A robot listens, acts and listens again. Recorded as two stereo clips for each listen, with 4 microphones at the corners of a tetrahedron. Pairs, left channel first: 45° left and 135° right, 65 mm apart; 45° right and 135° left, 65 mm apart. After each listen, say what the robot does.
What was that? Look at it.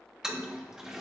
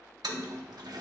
Turn 145° left.
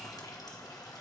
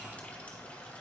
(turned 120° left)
Turn 25° left.
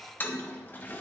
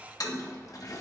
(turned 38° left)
Turn 15° right.
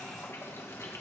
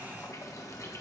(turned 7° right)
Found it: a toilet flushing, straight ahead, 1 to 2 m away.